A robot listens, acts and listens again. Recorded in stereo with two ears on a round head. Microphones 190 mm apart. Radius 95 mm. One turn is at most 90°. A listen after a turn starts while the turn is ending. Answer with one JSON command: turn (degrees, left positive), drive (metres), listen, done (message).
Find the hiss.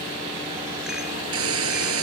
{"turn": -70}
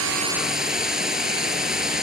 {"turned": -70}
{"done": "Found it: a hiss, straight ahead."}